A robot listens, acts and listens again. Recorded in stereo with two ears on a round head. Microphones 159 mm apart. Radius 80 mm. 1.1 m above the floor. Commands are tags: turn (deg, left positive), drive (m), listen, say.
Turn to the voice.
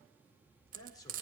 <turn deg="20"/>
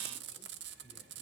<listen/>
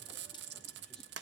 <listen/>
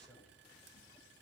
<say>I heard a man speaking, but can't make it out now. It was about straight ahead or 140° left.</say>